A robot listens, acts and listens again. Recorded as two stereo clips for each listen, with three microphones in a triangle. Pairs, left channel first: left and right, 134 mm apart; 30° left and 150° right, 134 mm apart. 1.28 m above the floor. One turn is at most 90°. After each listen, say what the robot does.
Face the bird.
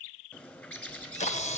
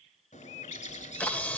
Turn 15° left.
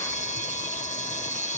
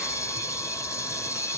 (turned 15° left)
Keep listening.
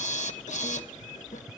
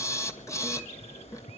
Found it: a bird, straight ahead, 2 to 4 m away.